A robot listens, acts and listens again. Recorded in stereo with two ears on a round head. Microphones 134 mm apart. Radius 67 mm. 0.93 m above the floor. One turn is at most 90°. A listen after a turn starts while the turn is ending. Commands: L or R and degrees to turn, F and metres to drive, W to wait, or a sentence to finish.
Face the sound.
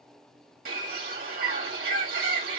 R65
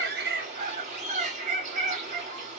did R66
R50
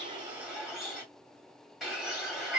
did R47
Facing the bird, 2 to 4 m away.